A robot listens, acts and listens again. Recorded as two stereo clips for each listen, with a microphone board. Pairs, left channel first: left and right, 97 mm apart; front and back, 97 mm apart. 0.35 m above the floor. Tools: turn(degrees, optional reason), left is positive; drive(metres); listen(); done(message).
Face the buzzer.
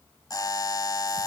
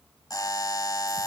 turn(degrees=45, reason="The buzzer: 45° left.")
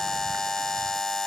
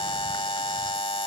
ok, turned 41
done("Facing the buzzer.")